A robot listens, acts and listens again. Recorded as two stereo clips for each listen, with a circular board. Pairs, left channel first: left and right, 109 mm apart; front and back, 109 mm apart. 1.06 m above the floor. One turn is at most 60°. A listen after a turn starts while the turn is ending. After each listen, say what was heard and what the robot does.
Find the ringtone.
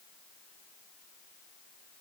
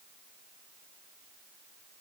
Keep listening.
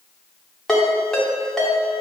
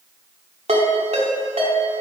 The ringtone: 175° left. Turn 60° left.
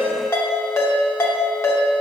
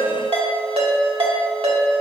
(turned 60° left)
The ringtone is now 155° left. Turn 60° left.
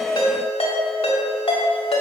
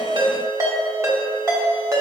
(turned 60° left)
The ringtone is now 120° left. Turn 60° left.
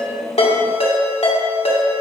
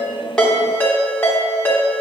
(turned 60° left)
The ringtone is now 75° left. Turn 60° left.
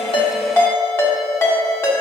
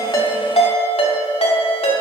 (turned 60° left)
The ringtone is now 25° left. Turn 25° left.
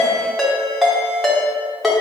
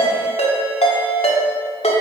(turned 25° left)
Found it: a ringtone, straight ahead.